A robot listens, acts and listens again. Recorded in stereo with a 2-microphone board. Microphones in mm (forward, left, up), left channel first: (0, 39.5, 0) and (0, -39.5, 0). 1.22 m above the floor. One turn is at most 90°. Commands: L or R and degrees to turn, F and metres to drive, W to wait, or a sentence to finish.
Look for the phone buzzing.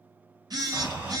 R55
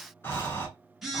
Facing the phone buzzing, 1 to 2 m away.